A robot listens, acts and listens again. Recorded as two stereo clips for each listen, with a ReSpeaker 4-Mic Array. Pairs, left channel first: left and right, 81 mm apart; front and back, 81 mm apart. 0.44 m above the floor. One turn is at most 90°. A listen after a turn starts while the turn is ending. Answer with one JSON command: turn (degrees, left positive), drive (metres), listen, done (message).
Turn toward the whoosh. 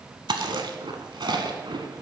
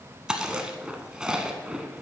{"listen": true}
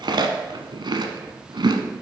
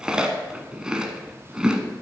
{"listen": true}
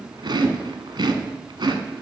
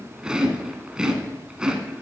{"turn": -90}
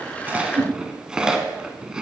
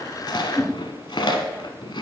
{"turn": -50}
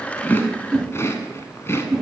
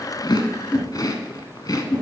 {"turn": -10}
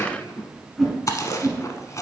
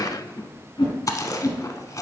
{"done": "Found it: a whoosh, straight ahead."}